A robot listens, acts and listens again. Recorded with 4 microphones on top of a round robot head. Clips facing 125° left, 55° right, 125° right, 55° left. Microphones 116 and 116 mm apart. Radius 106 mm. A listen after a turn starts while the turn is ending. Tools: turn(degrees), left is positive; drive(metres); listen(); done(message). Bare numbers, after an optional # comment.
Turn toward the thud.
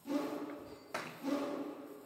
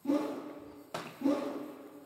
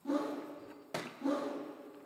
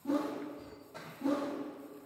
# The thud: 130° right.
turn(-130)
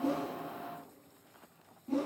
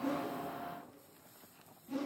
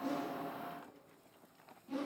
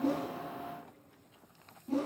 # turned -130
done("I heard a thud from this way, but can't make it out now.")